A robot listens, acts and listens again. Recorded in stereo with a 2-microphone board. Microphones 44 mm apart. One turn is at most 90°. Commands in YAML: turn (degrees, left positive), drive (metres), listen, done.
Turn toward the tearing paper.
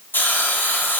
listen: true
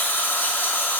listen: true
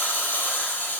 done: "I can't make out tearing paper, only a hiss."